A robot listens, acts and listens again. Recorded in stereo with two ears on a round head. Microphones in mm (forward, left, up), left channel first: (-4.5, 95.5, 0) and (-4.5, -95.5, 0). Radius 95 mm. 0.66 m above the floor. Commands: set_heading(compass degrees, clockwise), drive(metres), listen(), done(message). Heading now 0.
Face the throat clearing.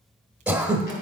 set_heading(30)
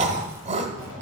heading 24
set_heading(174)
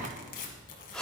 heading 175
done("Found it: throat clearing, straight ahead, 1 to 2 m away.")